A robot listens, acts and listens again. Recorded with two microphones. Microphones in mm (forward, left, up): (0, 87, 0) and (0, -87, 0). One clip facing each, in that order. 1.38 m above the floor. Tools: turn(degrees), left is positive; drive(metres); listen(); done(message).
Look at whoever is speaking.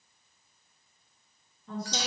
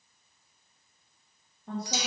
turn(degrees=-65)
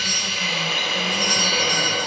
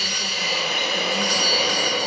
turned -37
listen()
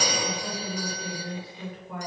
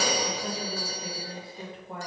turn(degrees=-30)
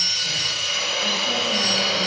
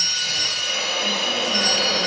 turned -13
turn(degrees=-15)
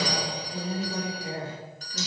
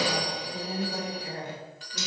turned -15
done("Facing the woman speaking, 2 to 4 m away.")